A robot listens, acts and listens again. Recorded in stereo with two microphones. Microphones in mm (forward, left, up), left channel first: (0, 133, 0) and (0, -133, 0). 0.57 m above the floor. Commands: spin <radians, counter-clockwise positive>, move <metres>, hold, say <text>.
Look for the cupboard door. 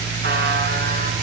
hold
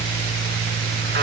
hold
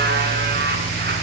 say I can't make out a cupboard door to turn to.